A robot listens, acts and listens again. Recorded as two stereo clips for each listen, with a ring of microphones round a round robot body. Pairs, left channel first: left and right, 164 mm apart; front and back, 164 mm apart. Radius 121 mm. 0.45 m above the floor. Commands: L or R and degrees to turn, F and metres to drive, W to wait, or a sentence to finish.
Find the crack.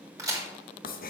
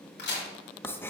R20
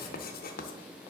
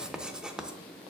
Facing where the crack came from. I can't hear it now.